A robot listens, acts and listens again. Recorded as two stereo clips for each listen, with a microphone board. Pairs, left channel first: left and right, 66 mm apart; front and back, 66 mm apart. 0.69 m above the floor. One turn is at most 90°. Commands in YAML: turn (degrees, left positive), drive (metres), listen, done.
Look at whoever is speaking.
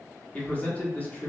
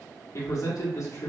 turn: 25
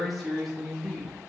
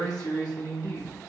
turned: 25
done: "Found it: a man speaking, straight ahead, 1 to 2 m away."